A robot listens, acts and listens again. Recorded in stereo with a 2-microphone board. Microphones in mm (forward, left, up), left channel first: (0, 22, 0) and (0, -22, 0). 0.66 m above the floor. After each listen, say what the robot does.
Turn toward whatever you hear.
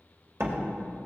Turn 70° right.
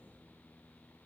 Keep listening.
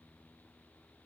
I heard a door slam, but can't make it out now. It was about straight ahead or 40° right.